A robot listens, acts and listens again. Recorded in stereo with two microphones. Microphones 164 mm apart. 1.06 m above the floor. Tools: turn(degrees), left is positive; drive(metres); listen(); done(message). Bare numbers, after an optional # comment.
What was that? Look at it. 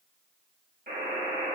# The buzzer: about 65° right or 115° right.
turn(-65)
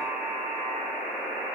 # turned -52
# So it is at 15° right.
turn(-15)
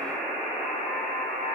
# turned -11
done("Found it: a buzzer, straight ahead.")